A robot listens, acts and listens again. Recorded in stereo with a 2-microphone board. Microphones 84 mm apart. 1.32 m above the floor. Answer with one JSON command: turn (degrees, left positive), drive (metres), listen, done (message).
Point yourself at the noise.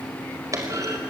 {"turn": -40}
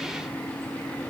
{"listen": true}
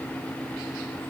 {"done": "I heard a clunk, but can't make it out now. It was about straight ahead or 100° right."}